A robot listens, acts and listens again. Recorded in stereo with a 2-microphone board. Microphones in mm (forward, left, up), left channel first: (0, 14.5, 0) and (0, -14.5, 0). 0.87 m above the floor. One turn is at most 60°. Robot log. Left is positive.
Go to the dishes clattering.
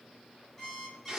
cmd idle
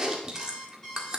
cmd idle
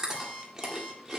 end: I can't make out dishes clattering to turn to.